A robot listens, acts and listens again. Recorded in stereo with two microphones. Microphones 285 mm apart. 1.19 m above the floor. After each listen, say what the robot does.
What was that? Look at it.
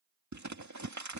Turn 90° right.
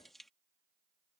Facing the crumpling.